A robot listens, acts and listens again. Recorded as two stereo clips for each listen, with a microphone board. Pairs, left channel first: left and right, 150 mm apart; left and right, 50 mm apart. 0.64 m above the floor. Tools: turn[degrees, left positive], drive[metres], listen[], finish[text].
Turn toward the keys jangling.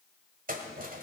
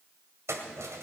Thought: The keys jangling: about 70° right or 110° right.
Action: turn[-70]
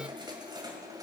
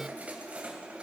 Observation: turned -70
Thought: So it is at 25° right.
Action: turn[-25]
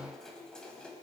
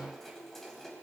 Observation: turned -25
Action: finish[Found it: keys jangling, straight ahead.]